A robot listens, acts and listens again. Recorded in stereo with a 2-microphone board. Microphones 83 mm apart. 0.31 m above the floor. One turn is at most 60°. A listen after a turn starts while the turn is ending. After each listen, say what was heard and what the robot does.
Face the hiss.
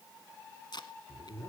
Keep listening.
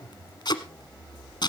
Keep listening.
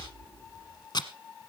I can't make out a hiss, only tape being pulled and a zipper.